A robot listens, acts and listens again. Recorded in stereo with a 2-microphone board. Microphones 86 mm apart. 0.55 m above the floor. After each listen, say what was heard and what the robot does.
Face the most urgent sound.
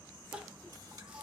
Turn 30° right.
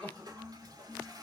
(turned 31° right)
So it is at 15° left. Turn 15° left.
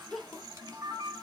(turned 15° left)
Facing the crying.